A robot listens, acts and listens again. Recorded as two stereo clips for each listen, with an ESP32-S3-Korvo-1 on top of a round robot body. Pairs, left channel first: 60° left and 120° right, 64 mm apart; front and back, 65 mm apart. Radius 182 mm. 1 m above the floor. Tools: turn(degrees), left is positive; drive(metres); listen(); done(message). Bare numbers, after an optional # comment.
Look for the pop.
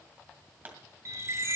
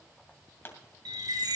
# The pop: 55° right.
turn(-55)
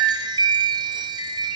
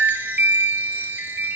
done("Facing where the pop came from. I can't hear it now.")